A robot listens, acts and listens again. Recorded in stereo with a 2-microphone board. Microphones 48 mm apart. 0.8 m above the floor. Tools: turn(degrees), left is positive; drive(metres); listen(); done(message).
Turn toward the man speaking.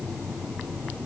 listen()
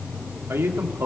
turn(degrees=-55)
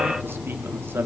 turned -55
turn(degrees=-60)
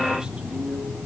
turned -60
listen()
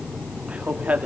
turn(degrees=-30)
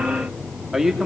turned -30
done("Found it: a man speaking, straight ahead, 2 to 4 m away.")